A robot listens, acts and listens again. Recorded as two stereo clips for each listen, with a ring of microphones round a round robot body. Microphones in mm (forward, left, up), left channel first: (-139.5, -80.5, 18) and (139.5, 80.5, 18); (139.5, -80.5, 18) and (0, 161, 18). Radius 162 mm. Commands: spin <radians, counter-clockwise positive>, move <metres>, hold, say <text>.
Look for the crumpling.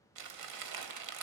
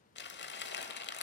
say Facing the crumpling.